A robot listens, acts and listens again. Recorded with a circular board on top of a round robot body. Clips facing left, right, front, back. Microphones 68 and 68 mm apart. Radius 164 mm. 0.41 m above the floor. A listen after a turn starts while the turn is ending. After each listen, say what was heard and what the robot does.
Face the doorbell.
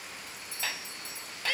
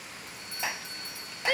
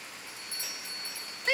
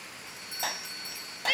The doorbell: 110° right. Turn 110° right.
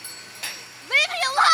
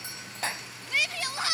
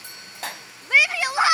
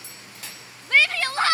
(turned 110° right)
Keep listening.
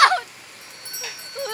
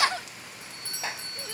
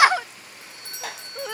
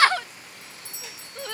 The doorbell is now 20° left. Turn 20° left.
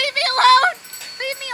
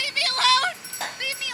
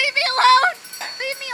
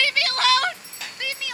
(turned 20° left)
Facing the doorbell.